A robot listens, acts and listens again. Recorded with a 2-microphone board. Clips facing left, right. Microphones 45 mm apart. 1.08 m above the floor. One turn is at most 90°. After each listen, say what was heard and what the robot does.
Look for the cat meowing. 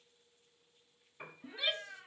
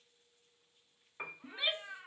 The cat meowing: about 70° right or 110° right. Turn 70° right.
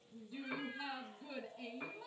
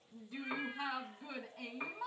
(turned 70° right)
Keep listening.
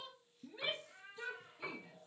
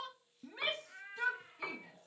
So it is at 45° right. Turn 45° right.
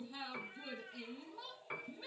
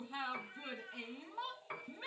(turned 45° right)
Found it: a cat meowing, straight ahead, over 4 m away.